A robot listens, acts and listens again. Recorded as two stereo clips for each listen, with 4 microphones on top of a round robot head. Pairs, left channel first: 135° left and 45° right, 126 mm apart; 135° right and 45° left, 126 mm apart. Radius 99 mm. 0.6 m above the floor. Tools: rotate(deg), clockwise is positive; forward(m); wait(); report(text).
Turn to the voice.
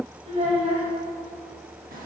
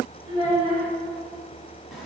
report("Found it: a child speaking, straight ahead, 2 to 4 m away.")